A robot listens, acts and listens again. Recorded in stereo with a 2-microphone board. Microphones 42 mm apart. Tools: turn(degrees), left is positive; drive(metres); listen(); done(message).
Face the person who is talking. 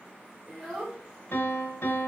turn(degrees=30)
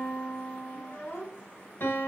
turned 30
turn(degrees=100)
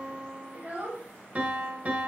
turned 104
turn(degrees=-45)
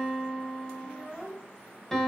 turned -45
done("Found it: a child speaking, straight ahead.")